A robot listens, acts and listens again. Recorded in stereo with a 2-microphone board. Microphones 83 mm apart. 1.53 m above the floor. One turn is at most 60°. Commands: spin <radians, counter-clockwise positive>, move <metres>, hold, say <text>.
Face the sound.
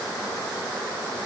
hold
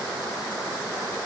hold
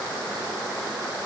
say I can't make out anything.